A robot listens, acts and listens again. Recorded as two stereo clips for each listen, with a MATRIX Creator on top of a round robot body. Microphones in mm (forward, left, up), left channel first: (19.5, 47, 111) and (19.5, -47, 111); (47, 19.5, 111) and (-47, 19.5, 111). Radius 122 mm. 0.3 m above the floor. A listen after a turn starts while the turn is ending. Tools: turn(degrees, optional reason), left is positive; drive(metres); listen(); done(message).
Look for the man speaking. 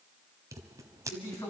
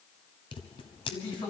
turn(degrees=30, reason="The man speaking: 30° left.")
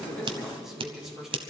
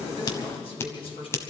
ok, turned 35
done("Facing the man speaking.")